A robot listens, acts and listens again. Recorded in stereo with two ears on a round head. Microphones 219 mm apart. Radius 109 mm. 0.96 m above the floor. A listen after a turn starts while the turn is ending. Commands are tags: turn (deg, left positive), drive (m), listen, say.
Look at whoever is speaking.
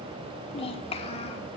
<turn deg="25"/>
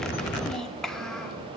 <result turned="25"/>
<say>Found it: a child speaking, straight ahead, 2 to 4 m away.</say>